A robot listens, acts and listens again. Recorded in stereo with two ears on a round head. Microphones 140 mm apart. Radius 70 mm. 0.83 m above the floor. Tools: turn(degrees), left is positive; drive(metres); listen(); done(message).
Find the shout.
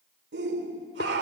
turn(degrees=-90)
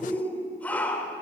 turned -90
turn(degrees=10)
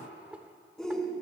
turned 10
done("Facing the shout.")